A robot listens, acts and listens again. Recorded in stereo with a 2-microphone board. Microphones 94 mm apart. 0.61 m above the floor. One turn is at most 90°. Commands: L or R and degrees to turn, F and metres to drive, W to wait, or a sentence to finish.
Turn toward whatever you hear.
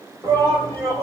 R30
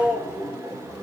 Found it: a shout, straight ahead.